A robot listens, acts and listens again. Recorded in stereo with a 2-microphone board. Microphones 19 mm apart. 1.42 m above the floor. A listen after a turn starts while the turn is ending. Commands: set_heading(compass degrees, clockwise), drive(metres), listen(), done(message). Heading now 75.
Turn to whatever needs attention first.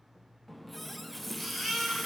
set_heading(105)
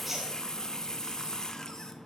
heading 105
listen()
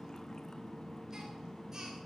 listen()
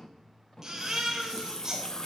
set_heading(245)
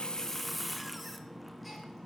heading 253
listen()
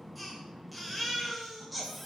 done("Found it: a baby crying, straight ahead.")